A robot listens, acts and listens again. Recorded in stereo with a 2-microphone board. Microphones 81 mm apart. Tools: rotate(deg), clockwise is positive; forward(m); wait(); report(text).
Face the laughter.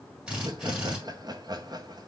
rotate(55)
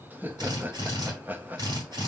rotate(25)
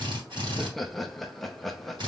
report("Found it: laughter, straight ahead.")